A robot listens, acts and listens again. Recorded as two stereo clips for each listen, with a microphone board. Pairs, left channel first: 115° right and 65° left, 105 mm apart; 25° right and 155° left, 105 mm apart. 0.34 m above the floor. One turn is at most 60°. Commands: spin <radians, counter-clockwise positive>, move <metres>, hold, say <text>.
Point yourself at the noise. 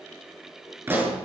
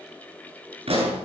spin 1.05
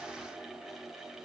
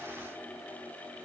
spin 1.05
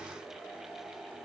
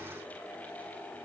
spin 0.26
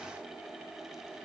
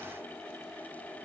say Facing where the pop came from. I can't hear it now.